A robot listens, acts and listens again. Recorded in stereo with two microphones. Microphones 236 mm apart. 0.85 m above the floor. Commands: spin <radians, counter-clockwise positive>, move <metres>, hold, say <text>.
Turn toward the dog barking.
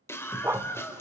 spin -0.52
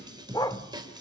spin 0.35
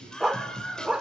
say Found it: a dog barking, straight ahead.